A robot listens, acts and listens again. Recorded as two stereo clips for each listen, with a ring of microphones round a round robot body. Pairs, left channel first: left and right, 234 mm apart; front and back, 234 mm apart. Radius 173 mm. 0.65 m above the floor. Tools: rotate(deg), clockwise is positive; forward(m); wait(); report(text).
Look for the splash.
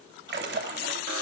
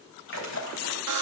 rotate(50)
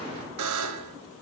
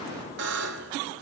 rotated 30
rotate(20)
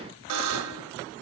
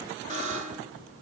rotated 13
report("I heard a splash from this way, but can't make it out now.")